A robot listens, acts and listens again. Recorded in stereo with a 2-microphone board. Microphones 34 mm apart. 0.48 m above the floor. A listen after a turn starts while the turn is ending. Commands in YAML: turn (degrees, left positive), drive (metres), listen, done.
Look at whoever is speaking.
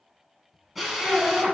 turn: 35
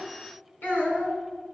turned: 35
turn: 110
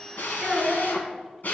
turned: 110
turn: 25
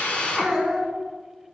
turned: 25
done: "Facing the child speaking."